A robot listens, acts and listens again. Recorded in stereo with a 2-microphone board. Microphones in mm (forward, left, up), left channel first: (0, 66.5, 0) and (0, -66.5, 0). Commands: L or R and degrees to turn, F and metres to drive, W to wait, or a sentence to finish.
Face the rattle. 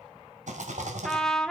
R65
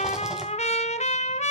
W
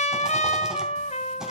W
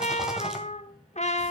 I heard a rattle, but can't make it out now. It was about straight ahead or 50° right.